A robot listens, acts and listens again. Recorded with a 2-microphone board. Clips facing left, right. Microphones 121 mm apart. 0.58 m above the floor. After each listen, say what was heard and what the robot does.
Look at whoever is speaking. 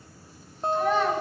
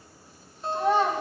The child speaking: about 30° right or 150° right. Turn 30° right.
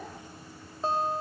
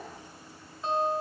Keep listening.
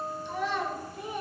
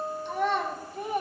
So it is at 120° right. Turn 120° right.
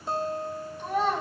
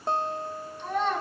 The child speaking is now 10° left. Turn 10° left.
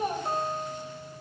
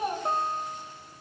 Found it: a child speaking, straight ahead, 2 to 4 m away.